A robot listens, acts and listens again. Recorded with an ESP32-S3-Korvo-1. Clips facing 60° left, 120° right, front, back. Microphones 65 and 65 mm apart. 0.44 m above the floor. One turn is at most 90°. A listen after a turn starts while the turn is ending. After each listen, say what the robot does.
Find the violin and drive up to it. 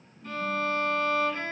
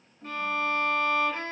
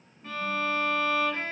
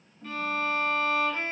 Turn 75° right.
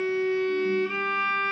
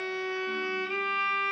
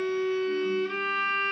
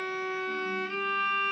Turn 25° left.
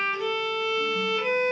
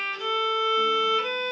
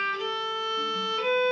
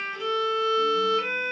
Turn 15° left.
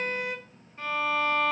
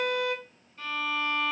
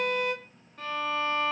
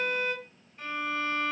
Drive 1.0 m forward.
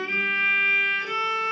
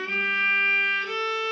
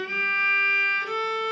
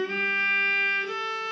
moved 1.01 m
Turn 10° right.
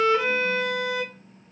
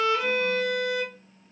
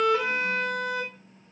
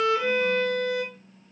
Drive 1.0 m forward.
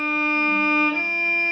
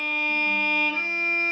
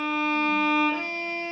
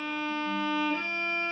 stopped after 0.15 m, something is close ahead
Arrived at the violin, straight ahead.